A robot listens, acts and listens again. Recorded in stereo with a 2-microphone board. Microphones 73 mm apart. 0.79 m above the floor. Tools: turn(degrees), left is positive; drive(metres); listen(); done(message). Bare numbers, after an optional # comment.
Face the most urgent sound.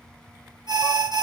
# The alarm: about 75° right or 105° right.
turn(-75)
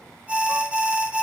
# So it is at 15° right.
turn(-15)
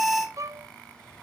done("Found it: an alarm, straight ahead, 2 to 4 m away.")